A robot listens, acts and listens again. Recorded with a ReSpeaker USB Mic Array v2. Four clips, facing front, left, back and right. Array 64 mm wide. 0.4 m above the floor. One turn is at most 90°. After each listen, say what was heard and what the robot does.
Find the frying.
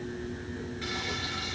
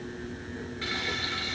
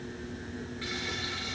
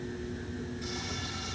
The frying: 90° left. Turn 90° left.
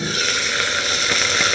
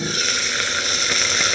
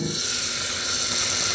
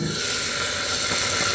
The frying is now 30° left. Turn 30° left.
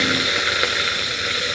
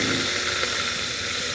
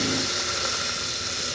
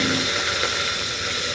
Found it: frying, straight ahead, 2 to 4 m away.